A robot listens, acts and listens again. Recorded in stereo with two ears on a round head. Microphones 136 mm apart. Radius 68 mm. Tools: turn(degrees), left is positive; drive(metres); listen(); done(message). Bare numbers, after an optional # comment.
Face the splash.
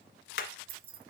listen()
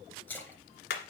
turn(30)
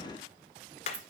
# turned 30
listen()
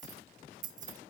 done("I heard a splash, but can't make it out now. It was about 20° right or 140° left.")